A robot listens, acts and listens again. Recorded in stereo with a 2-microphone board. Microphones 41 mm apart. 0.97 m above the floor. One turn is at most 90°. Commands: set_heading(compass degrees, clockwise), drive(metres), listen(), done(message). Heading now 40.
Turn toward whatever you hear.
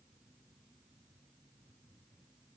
listen()
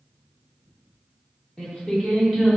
set_heading(10)
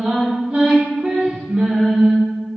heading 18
set_heading(43)
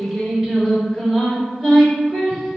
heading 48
done("Facing the singing, over 4 m away.")